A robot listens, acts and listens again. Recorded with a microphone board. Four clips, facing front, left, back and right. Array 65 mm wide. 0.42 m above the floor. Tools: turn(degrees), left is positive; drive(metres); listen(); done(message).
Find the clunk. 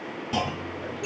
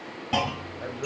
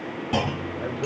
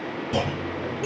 turn(degrees=115)
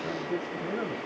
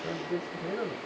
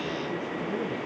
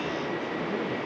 done("Facing where the clunk came from. I can't hear it now.")